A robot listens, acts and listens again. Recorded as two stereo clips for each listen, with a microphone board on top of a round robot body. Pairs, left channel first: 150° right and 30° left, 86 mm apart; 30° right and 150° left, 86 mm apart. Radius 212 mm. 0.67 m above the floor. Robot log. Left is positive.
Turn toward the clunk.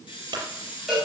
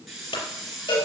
end: Facing the clunk, over 4 m away.